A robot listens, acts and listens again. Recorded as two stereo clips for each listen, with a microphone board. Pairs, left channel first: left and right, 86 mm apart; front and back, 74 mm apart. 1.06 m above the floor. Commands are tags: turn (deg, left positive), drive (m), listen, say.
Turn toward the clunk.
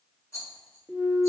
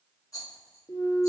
<say>Facing the clunk.</say>